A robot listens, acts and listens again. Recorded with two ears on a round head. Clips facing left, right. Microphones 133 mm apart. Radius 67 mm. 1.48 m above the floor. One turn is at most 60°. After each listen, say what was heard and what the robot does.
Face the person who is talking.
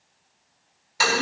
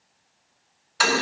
Keep listening.
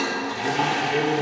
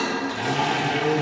The man speaking: about 60° left or 120° left. Turn 60° left.
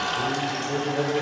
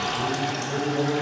So it is at 15° left. Turn 15° left.
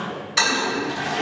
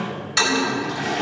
Found it: a man speaking, straight ahead, 2 to 4 m away.